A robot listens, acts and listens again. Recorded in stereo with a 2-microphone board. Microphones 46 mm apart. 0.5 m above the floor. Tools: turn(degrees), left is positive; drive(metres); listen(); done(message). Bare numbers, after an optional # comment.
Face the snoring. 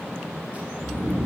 # The snoring: about 65° right or 115° right.
turn(-65)
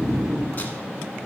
# So it is at 10° right.
turn(-10)
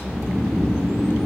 done("Facing the snoring.")